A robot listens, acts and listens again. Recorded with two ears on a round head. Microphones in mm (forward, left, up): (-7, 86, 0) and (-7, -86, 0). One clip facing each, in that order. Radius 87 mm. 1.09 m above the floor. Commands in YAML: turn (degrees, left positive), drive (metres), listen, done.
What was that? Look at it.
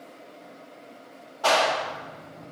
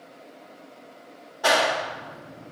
turn: -30
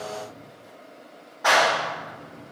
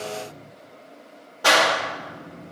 turn: -135
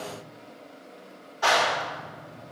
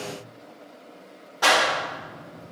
turn: -65
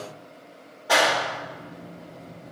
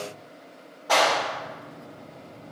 turn: 10
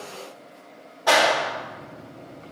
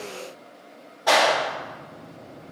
done: "Found it: a clap, straight ahead, 1 to 2 m away."